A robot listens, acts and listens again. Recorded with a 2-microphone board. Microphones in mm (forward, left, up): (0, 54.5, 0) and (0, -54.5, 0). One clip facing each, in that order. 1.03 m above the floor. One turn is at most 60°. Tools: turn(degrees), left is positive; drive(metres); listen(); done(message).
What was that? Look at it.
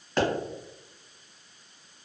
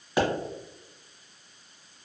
turn(degrees=-30)
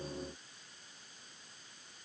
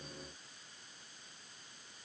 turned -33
listen()
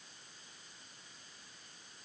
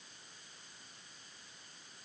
done("I heard a pop, but can't make it out now. It was about 25° left or 140° right.")